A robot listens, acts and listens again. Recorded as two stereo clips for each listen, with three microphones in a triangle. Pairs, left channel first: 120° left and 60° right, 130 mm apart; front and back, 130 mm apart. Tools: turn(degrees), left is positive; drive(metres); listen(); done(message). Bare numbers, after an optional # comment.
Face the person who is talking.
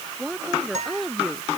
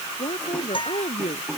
# The woman speaking: 35° left.
turn(35)
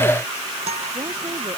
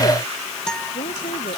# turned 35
listen()
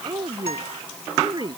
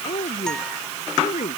done("Facing the woman speaking.")